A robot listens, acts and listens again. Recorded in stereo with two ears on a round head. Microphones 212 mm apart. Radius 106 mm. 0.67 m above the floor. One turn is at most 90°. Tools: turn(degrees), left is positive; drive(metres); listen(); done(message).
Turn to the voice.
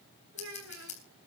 turn(degrees=-60)
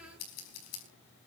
listen()
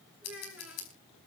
done("Facing the child speaking, over 4 m away.")